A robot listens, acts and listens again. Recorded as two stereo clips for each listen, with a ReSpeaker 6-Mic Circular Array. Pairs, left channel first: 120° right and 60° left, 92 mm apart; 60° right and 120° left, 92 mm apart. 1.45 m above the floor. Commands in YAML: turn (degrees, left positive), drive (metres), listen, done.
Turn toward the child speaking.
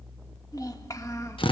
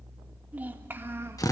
turn: -175
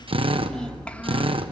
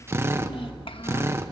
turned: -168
turn: -45
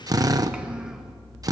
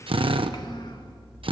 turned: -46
listen: true
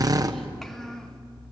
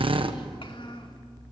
turn: -35
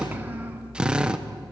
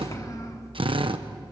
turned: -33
listen: true
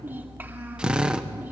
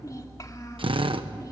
done: "Facing the child speaking."